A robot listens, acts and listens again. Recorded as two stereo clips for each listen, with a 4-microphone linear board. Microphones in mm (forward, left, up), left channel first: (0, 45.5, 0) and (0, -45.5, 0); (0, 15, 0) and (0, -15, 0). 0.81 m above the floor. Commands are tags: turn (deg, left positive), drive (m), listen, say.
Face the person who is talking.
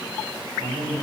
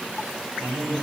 <turn deg="-90"/>
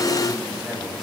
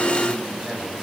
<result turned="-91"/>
<say>Facing the man speaking, over 4 m away.</say>